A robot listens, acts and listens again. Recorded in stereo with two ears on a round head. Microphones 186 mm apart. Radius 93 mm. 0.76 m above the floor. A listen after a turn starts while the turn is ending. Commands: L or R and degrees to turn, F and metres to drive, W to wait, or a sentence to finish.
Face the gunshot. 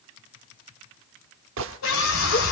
R65
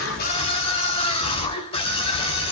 W
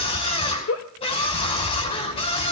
I heard a gunshot, but can't make it out now. It was about straight ahead or 50° right.